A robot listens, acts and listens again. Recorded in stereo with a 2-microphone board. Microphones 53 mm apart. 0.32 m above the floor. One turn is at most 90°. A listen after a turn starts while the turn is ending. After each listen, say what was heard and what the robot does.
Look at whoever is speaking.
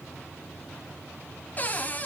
Keep listening.
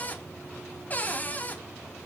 Keep listening.
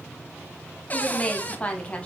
The woman speaking: about 25° left or 155° left. Turn 25° left.
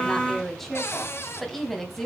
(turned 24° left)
Found it: a woman speaking, straight ahead, 2 to 4 m away.